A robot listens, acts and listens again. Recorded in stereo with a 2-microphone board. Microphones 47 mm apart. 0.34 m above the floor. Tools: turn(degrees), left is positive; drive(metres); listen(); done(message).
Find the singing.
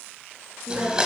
turn(degrees=-90)
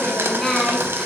done("Found it: singing, straight ahead, 1 to 2 m away.")